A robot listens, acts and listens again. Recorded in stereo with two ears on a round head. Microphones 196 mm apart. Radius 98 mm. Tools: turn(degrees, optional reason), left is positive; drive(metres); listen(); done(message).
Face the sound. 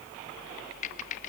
turn(degrees=35, reason="The typing on a keyboard: about 35° left or 145° left.")
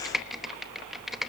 done("Found it: typing on a keyboard, straight ahead.")